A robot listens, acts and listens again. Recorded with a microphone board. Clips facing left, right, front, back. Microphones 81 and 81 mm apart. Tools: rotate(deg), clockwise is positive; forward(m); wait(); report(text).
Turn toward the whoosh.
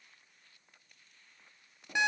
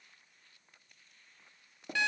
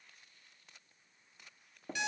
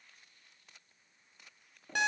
wait()
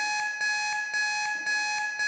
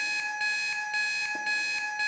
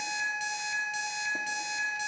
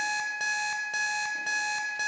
wait()
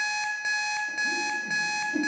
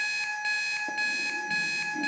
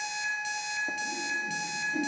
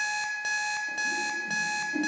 rotate(-110)
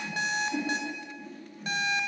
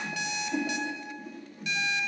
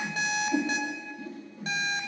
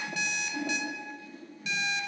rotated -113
report("Found it: a whoosh, straight ahead, 2 to 4 m away.")